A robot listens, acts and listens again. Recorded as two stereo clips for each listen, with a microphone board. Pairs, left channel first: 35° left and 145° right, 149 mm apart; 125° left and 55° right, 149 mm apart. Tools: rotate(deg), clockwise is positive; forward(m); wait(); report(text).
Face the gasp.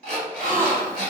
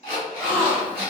rotate(140)
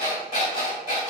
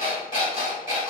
report("I heard a gasp from this way, but can't make it out now.")